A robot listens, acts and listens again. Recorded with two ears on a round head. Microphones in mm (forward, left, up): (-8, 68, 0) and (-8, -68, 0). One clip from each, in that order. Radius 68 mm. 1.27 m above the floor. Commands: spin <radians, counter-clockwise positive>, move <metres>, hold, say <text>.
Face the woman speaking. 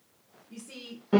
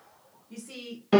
spin -0.52
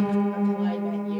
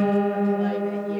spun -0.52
hold
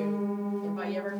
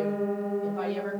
hold
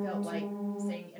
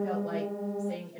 spin 0.87
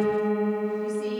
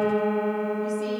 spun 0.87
hold
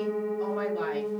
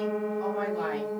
hold
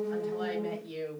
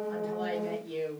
spin 0.35
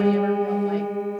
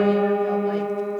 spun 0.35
hold
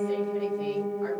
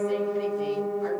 hold
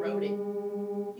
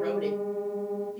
say Facing where the woman speaking came from. I can't hear it now.